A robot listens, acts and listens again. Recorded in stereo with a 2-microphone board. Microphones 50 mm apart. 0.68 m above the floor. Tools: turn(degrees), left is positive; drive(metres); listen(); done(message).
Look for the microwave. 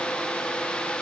listen()
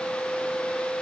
listen()
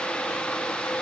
done("I can't make out a microwave to turn to.")